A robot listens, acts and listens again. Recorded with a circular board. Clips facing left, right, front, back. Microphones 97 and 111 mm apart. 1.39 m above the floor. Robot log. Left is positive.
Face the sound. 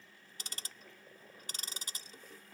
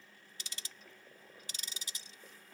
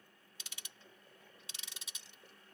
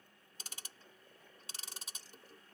note: The ticking: 130° left.
cmd yaw +130
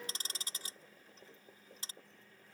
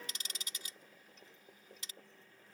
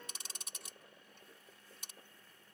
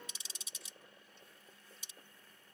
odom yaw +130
note: The ticking is now 35° left.
cmd yaw +35
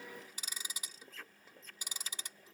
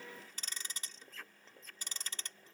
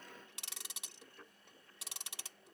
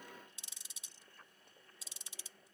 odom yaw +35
note: The ticking is now 10° left.
cmd yaw +10
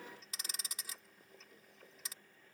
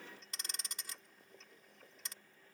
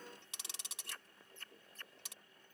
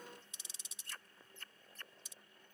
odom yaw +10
end: Facing the ticking.